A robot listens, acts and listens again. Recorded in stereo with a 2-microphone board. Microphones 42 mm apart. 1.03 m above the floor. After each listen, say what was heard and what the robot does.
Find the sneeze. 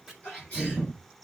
The sneeze: about 30° left or 150° left. Turn 30° left.
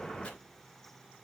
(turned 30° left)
Keep listening.
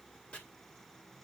I heard a sneeze, but can't make it out now. It was about straight ahead or 120° left.